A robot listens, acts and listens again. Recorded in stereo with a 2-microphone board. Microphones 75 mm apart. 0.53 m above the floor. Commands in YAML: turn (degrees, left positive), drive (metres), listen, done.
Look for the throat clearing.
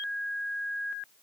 listen: true
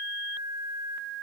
listen: true
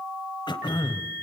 turn: 90
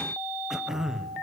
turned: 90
done: "Facing the throat clearing."